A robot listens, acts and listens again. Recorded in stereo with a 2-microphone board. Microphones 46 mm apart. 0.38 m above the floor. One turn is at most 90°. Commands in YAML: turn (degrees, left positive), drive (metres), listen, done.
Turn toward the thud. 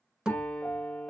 turn: -20
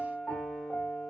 listen: true
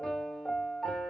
done: "I heard a thud, but can't make it out now. It was about straight ahead or 140° right."